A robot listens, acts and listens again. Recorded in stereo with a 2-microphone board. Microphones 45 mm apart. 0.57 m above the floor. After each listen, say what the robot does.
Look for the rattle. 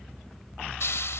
Keep listening.
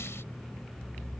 Keep listening.
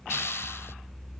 I can't make out a rattle to turn to.